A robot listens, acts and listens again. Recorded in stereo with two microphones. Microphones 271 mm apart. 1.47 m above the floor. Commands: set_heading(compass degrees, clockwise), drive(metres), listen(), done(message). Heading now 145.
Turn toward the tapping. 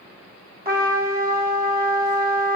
listen()
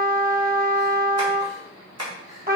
set_heading(215)
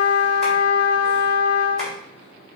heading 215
listen()
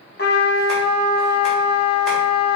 listen()
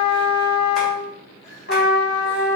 done("I heard tapping, but can't make it out now. It was about straight ahead or 40° right.")